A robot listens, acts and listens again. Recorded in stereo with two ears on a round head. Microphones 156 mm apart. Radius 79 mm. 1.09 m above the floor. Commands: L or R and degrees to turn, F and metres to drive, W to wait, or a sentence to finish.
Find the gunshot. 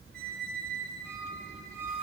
W
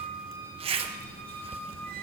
W
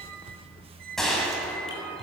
L30
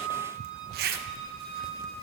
W
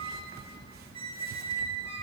I heard a gunshot, but can't make it out now. It was about 30° right or 150° left.